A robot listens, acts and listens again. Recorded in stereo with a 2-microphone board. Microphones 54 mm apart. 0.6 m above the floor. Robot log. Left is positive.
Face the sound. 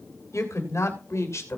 note: The woman speaking: about 60° left or 120° left.
cmd yaw +60
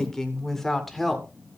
end: Found it: a woman speaking, straight ahead.